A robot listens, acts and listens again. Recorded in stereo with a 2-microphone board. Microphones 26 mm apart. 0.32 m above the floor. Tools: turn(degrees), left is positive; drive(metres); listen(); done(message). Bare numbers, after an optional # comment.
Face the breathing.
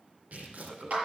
# The breathing: about 30° right or 150° right.
turn(-30)
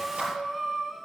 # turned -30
done("Found it: breathing, straight ahead, 1 to 2 m away.")